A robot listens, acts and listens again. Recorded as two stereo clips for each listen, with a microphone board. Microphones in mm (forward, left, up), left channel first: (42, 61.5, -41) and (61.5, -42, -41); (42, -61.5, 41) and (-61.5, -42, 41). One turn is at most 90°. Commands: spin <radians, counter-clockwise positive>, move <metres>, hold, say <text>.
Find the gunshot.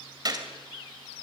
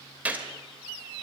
spin -1.57
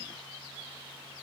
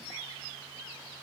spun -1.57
spin -0.44
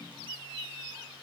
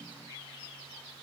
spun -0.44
say I heard a gunshot from this way, but can't make it out now.